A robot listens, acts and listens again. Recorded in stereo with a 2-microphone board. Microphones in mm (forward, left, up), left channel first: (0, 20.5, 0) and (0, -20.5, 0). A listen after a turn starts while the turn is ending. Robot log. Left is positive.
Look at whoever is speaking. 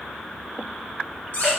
cmd idle
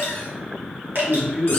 cmd yaw -30
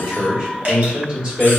note: So it is at 145° right.
cmd yaw -145
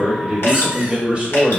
note: The man speaking is now 30° right.
cmd yaw -30
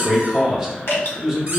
note: The man speaking is now 10° right.
cmd yaw -10
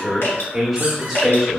end: Facing the man speaking, 1 to 2 m away.